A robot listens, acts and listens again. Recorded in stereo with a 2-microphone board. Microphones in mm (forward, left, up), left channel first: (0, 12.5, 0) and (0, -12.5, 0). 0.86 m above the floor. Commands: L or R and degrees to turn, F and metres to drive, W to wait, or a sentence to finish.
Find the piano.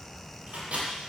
W
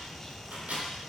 W
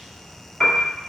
L20
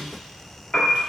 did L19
L140
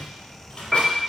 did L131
Found it: a piano, straight ahead.